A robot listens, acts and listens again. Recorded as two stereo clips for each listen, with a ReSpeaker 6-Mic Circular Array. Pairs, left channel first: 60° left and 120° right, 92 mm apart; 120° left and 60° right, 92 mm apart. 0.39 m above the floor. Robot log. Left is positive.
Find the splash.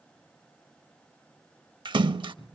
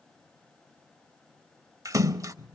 note: The splash: 110° right.
cmd yaw -110
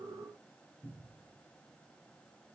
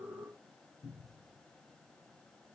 end: I heard a splash from this way, but can't make it out now.